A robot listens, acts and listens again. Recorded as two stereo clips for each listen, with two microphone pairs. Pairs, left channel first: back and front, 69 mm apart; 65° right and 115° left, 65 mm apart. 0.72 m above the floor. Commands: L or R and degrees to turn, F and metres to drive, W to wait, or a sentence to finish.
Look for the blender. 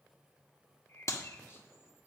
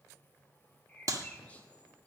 W
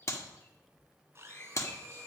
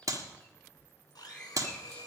R55
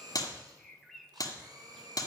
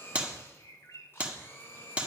R10
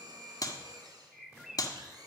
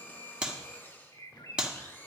Facing the blender, 2 to 4 m away.